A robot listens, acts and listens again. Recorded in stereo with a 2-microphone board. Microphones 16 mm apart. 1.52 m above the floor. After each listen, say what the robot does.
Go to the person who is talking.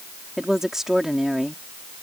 Turn 35° right.
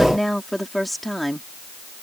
Drive 1.0 m forward.
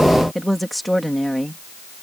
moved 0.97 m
Drive 1.0 m forward.
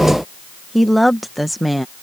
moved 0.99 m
Drive 1.0 m forward.
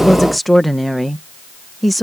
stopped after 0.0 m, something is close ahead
I am next to the woman speaking.